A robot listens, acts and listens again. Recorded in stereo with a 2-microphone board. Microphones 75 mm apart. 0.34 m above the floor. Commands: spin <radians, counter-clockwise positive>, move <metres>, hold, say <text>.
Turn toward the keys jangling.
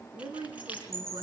spin -0.35
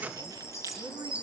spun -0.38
hold
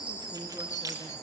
spin -2.09
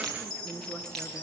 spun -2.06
hold
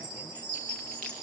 hold
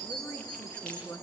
say I heard keys jangling from this way, but can't make it out now.